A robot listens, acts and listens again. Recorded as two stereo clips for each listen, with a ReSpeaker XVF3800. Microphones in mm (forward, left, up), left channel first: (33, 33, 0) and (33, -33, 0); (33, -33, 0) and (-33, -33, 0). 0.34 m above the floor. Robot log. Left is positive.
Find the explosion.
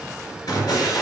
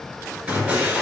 note: The explosion: 110° left.
cmd yaw +110
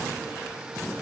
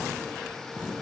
end: Facing where the explosion came from. I can't hear it now.